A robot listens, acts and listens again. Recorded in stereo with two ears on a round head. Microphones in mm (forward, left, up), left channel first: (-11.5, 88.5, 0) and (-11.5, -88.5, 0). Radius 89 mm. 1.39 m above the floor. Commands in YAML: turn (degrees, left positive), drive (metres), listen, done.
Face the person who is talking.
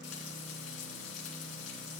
listen: true
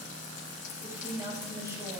turn: -15
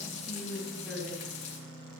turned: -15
turn: -30
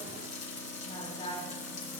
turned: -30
turn: 25
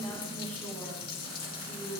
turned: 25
turn: 10
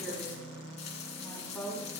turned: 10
done: "Facing the woman speaking, over 4 m away."